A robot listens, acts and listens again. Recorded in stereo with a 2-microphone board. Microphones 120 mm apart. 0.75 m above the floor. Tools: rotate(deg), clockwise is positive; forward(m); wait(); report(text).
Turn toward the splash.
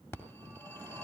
wait()
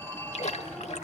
rotate(-60)
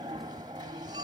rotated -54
wait()
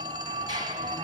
report("I heard a splash, but can't make it out now. It was about 5° left or 65° left.")